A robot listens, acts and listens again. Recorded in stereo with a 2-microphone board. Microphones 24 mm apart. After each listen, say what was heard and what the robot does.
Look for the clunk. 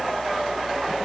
Keep listening.
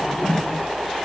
Keep listening.
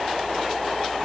I can't make out a clunk to turn to.